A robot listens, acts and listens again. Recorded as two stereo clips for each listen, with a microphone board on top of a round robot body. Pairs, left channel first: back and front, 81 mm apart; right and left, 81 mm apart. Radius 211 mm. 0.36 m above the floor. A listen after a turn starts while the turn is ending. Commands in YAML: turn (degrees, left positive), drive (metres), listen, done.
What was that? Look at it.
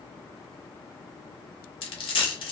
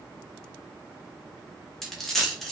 turn: -175
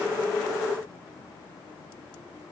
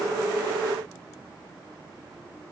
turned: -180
done: "I heard a dropped coin from this way, but can't make it out now."